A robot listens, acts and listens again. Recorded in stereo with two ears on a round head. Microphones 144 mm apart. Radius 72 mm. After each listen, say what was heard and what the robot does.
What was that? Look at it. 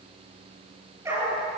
The dog barking: about 15° right or 165° right. Turn 15° right.
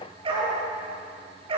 The dog barking: about 35° right or 145° right. Turn 35° right.
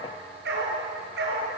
So it is at 105° right. Turn 105° right.
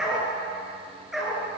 Found it: a dog barking, straight ahead.